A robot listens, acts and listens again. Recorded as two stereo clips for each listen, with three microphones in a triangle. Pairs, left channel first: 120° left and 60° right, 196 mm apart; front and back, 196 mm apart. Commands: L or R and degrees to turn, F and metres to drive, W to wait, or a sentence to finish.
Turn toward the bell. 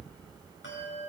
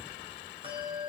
L120
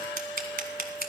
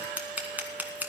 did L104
L15
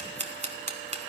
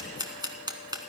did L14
W
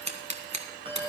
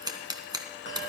Found it: a bell, straight ahead, 2 to 4 m away.